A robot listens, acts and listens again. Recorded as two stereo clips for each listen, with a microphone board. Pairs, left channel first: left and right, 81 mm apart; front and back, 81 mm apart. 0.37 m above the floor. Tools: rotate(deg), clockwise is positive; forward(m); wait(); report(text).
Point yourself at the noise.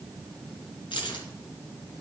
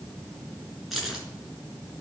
rotate(-95)
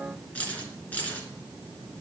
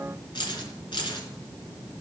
rotate(-20)
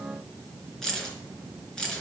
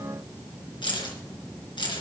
rotate(-10)
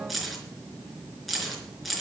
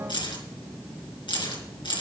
report("Found it: keys jangling, straight ahead, 2 to 4 m away.")